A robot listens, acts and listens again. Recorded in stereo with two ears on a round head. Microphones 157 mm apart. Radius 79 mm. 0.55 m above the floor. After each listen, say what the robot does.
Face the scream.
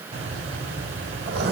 Keep listening.
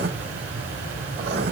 Keep listening.
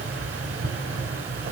I can't make out a scream to turn to.